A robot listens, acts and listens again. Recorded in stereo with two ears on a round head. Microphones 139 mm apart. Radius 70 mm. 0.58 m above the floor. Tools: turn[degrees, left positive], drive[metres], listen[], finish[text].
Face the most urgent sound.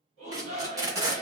Thought: The shout: about 50° right or 130° right.
Action: turn[-50]
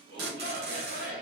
Thought: So it is at 75° right.
Action: turn[-75]
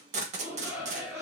Thought: The shout is now 15° right.
Action: turn[-15]
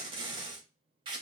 Action: listen[]
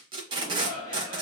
Action: finish[Facing the shout, 2 to 4 m away.]